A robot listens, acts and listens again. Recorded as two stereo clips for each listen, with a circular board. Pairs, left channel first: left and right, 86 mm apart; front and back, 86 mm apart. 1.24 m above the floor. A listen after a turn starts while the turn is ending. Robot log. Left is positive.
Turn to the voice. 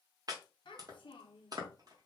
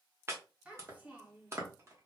note: The child speaking: 105° left.
cmd yaw +105
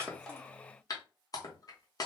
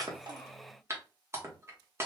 cmd idle
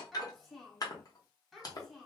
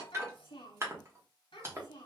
end: Found it: a child speaking, straight ahead.